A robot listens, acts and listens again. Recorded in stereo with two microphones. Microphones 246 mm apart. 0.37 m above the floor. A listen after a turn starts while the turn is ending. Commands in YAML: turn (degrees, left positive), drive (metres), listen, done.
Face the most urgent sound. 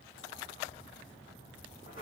listen: true
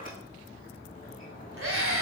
turn: -60
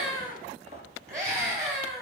turn: -40
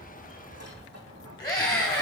turn: 20
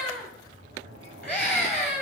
done: "Facing the scream."